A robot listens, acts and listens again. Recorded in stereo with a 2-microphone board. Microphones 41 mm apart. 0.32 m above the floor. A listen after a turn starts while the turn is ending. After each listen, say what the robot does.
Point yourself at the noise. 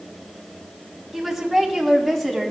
Turn 30° left.
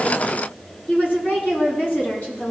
Turn 125° left.
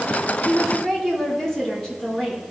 Turn 10° left.
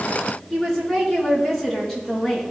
Facing the woman speaking.